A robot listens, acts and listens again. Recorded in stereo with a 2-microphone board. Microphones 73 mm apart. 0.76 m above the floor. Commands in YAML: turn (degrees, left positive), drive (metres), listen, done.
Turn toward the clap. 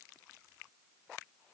listen: true
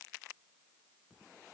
listen: true
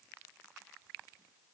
done: "I can't make out a clap to turn to."